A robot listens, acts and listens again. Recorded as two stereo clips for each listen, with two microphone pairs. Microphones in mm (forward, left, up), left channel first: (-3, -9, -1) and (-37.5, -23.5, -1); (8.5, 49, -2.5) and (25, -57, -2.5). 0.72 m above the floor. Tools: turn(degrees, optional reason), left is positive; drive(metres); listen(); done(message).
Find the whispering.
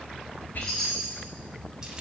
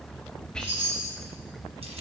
turn(degrees=15, reason="The whispering: 15° left.")
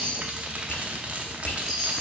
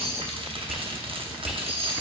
done("Facing the whispering, under 1 m away.")